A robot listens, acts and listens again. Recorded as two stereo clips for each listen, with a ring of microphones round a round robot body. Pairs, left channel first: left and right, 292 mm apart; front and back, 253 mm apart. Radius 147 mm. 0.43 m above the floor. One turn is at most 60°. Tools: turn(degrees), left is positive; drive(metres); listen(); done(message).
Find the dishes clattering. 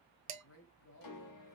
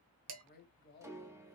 turn(degrees=-60)
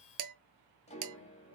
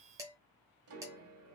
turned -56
turn(degrees=-60)
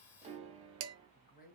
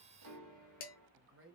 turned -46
turn(degrees=-55)
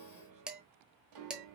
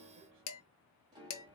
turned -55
done("Facing the dishes clattering.")